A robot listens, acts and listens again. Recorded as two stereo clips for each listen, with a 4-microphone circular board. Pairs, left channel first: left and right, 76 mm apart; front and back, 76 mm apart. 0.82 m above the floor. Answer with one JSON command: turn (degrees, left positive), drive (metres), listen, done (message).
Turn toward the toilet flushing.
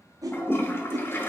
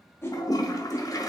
{"turn": 35}
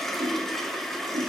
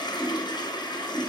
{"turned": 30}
{"done": "Found it: a toilet flushing, straight ahead, under 1 m away."}